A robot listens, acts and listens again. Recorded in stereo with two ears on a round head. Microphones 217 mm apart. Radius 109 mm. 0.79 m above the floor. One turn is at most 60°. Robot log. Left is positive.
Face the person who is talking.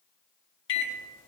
cmd idle
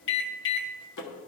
cmd idle
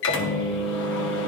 end: I can't make out anyone speaking to turn to.